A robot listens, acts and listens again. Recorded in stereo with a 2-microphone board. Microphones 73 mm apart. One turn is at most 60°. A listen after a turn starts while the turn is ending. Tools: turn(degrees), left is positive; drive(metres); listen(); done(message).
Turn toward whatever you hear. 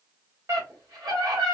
turn(degrees=-60)
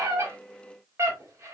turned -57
turn(degrees=-50)
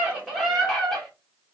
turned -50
done("Facing the scream.")